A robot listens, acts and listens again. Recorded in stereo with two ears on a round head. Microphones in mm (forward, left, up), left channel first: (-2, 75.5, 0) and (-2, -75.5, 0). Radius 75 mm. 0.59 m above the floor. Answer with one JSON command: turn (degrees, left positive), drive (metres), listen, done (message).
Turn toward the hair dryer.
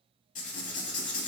{"listen": true}
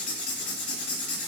{"listen": true}
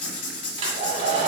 {"turn": -35}
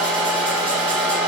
{"done": "Facing the hair dryer."}